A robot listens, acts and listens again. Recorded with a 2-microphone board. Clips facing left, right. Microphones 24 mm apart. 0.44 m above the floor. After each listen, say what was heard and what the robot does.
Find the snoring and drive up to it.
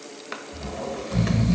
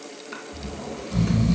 The snoring: about 30° left or 150° left. Turn 30° left.
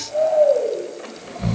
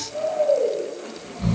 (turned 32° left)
So it is at 115° left. Turn 115° left.
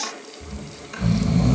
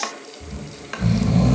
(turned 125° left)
The snoring is now 15° right. Turn 15° right.
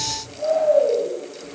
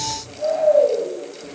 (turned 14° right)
Drive 1.0 m forward.
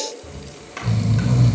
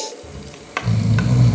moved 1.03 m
Drive 1.0 m forward.
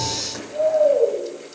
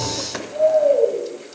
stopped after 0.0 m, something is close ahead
I am next to the snoring.